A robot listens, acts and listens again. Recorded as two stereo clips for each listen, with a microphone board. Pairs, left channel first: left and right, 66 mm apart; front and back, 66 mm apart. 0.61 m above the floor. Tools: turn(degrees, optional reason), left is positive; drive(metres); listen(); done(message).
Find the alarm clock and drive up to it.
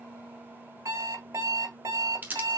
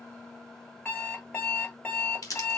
turn(degrees=-65, reason="The alarm clock: 65° right.")
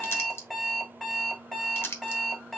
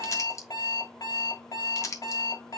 drive(metres=1.0)
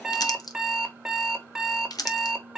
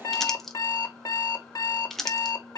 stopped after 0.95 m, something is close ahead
done("Arrived at the alarm clock, straight ahead.")